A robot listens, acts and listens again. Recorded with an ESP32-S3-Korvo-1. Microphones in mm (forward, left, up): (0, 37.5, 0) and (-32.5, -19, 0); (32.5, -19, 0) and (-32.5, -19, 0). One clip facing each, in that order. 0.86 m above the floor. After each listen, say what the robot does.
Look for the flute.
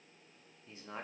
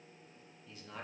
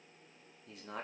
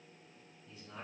Keep listening.
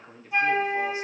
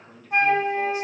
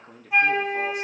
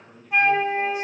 Turn 85° right.
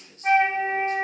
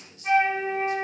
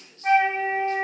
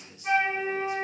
Turn 20° left.
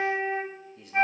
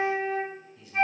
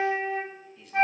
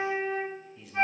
Found it: a flute, straight ahead, 1 to 2 m away.